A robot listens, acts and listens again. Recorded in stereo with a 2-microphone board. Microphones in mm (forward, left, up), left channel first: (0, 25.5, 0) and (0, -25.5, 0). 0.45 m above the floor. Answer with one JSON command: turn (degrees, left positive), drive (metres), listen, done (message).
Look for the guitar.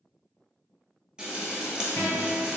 {"turn": 65}
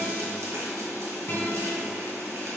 {"turn": 50}
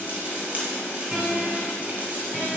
{"turn": -15}
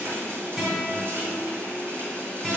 {"done": "Facing the guitar."}